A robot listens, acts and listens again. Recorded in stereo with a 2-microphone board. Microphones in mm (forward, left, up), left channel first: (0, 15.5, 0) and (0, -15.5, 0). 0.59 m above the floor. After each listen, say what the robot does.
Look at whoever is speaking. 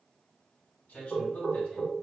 Turn 60° left.
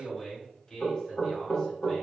Turn 40° left.
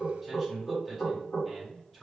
Facing the man speaking, 1 to 2 m away.